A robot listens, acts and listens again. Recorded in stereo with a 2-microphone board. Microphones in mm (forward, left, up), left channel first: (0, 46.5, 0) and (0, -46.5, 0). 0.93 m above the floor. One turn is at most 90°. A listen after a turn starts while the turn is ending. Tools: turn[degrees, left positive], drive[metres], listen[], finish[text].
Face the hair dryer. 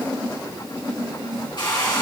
Thought: The hair dryer: about 60° left or 120° left.
Action: turn[60]
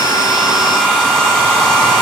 Action: finish[Found it: a hair dryer, straight ahead.]